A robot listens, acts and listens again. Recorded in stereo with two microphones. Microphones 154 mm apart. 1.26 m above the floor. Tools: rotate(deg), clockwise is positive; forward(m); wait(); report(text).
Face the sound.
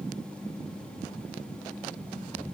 wait()
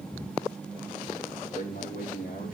rotate(-65)
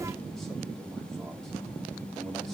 wait()
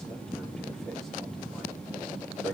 wait()
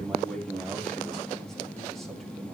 report("Found it: a man speaking, straight ahead, over 4 m away.")